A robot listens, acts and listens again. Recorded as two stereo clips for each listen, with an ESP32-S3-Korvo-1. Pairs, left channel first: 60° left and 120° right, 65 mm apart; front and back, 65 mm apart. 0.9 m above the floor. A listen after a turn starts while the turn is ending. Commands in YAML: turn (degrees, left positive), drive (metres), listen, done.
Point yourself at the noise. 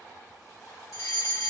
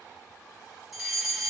turn: 95
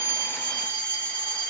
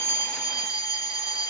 done: "Facing the fire alarm."